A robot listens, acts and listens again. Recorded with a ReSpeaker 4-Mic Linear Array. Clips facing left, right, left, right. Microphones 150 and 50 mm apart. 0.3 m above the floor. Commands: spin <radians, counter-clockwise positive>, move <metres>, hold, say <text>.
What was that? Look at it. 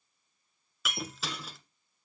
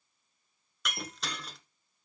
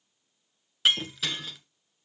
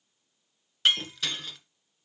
spin 0.52
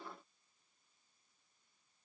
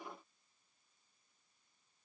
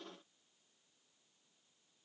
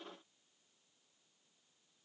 hold
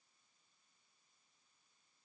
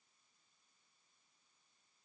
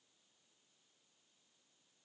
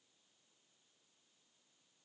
say I heard breaking glass, but can't make it out now. It was about 25° right or 145° left.